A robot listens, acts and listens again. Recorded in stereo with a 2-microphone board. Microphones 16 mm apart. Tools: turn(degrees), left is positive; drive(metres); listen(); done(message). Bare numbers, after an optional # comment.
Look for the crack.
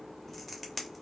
# The crack: about 20° left or 160° left.
turn(20)
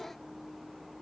listen()
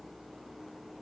done("I heard a crack, but can't make it out now. It was about straight ahead or 140° left.")